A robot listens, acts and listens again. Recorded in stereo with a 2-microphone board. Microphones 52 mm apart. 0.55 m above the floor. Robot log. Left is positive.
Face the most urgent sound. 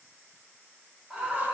cmd yaw -30
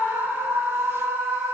note: So it is at 140° right.
cmd yaw -140
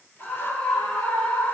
note: The scream is now 25° left.
cmd yaw +25
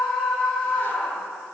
end: Facing the scream.